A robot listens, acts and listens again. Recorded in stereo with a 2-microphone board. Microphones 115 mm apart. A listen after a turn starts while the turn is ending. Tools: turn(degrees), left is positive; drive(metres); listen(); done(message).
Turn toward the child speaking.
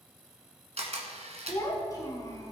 turn(degrees=30)
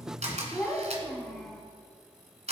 done("Found it: a child speaking, straight ahead.")